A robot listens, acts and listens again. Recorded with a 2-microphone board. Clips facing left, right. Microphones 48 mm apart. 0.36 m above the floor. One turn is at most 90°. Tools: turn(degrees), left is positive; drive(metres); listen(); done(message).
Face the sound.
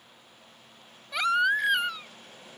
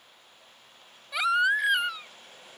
turn(degrees=-30)
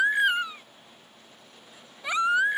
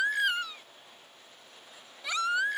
turn(degrees=25)
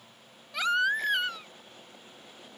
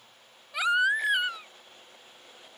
turn(degrees=-10)
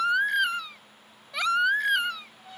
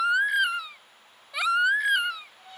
done("Facing the baby crying.")